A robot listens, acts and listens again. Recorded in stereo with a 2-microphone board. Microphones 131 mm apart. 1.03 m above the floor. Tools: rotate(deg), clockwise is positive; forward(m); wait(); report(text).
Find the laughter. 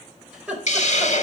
rotate(30)
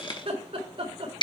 rotate(135)
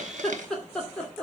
rotate(-10)
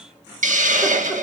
wait()
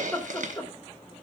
rotate(-15)
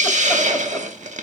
wait()
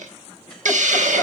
wait()
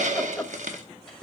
report("Found it: laughter, straight ahead, 1 to 2 m away.")